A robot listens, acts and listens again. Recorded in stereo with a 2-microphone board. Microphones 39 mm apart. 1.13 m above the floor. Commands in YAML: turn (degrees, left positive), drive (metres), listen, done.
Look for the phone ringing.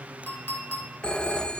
turn: 25
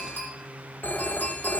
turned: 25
turn: 130
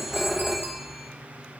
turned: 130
done: "Found it: a phone ringing, straight ahead."